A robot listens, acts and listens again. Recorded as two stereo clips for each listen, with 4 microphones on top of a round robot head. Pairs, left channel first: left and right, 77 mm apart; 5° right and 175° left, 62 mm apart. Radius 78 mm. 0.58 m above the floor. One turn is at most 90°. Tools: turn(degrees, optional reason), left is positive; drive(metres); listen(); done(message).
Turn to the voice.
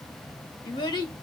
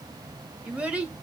turn(degrees=90, reason="The child speaking: 105° left.")
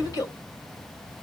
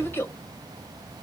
turn(degrees=45, reason="The child speaking is now 45° left.")
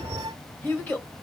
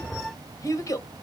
turn(degrees=20, reason="The child speaking is now 20° left.")
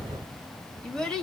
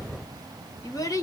turn(degrees=10, reason="The child speaking is now 10° left.")
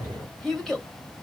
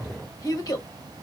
done("Found it: a child speaking, straight ahead, 1 to 2 m away.")